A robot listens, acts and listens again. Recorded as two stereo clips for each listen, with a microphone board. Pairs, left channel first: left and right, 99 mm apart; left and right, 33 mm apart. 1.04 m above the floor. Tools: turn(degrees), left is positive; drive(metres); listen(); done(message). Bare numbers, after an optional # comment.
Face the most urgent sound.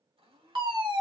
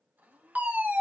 # The fire alarm: about 55° right or 125° right.
turn(-55)
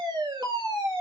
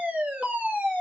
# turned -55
# So it is at 55° right.
turn(-55)
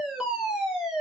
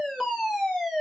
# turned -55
done("Found it: a fire alarm, straight ahead.")